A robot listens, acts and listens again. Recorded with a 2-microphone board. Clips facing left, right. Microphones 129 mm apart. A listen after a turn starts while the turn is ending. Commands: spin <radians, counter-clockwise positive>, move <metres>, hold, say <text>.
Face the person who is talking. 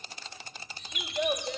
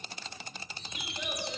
spin 1.13
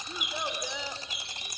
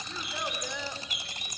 spin 0.26
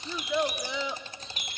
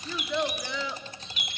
spin 0.35
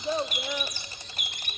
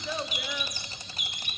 hold
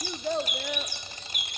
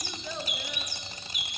spin 1.05
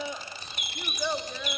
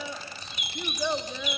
say Facing the child speaking, 1 to 2 m away.